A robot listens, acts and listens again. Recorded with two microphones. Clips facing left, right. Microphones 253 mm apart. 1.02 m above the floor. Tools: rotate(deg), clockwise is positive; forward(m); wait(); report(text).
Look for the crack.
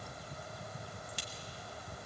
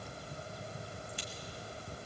rotate(-90)
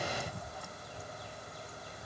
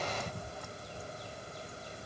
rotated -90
report("Facing where the crack came from. I can't hear it now.")